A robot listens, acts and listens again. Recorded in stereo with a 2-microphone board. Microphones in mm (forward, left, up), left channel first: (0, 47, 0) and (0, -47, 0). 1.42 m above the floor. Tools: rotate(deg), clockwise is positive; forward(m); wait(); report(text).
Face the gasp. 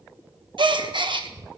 rotate(65)
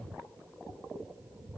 wait()
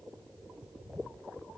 report("I heard a gasp, but can't make it out now. It was about straight ahead or 50° right.")